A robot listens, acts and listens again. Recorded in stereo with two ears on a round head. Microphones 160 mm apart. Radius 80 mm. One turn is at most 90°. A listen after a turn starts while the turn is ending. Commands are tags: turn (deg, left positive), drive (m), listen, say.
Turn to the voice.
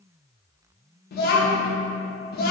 <turn deg="55"/>
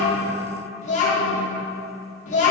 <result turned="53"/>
<turn deg="50"/>
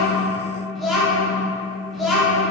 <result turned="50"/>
<say>Found it: a child speaking, straight ahead, under 1 m away.</say>